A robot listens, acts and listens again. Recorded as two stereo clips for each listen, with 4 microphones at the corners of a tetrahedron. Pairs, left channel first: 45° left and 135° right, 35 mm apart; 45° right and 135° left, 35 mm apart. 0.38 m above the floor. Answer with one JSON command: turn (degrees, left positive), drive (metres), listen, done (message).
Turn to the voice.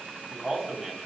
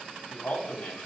{"turn": -40}
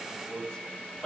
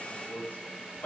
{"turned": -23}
{"turn": -20}
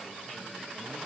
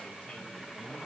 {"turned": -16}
{"listen": true}
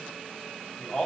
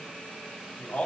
{"done": "Found it: a man speaking, straight ahead."}